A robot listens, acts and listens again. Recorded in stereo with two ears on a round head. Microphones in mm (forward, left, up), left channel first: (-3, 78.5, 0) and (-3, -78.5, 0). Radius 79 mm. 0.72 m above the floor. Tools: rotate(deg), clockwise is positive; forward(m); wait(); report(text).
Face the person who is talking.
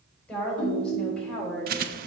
rotate(-30)
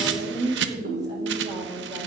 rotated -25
rotate(20)
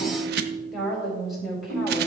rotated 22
report("Facing the woman speaking, 2 to 4 m away.")